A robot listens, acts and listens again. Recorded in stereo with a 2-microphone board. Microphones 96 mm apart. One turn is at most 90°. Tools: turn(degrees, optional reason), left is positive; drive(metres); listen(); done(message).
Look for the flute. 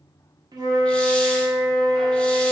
turn(degrees=-45, reason="The flute: about 45° right or 135° right.")
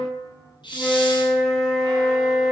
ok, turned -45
done("Found it: a flute, straight ahead.")